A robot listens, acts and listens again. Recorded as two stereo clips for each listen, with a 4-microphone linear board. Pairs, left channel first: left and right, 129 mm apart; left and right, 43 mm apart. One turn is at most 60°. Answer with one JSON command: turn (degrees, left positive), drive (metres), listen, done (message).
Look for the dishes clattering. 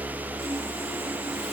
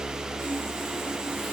{"listen": true}
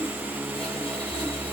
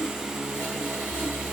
{"listen": true}
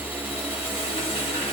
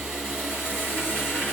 {"done": "I can't make out dishes clattering to turn to."}